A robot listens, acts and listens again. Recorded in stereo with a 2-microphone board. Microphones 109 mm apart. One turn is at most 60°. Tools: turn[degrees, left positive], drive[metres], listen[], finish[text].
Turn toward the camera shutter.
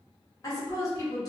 Action: listen[]
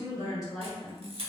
Thought: The camera shutter: about 65° right or 115° right.
Action: turn[-60]
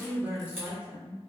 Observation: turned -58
Action: listen[]
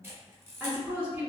Thought: So it is at 25° right.
Action: turn[-25]
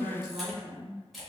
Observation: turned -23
Action: finish[Facing the camera shutter, under 1 m away.]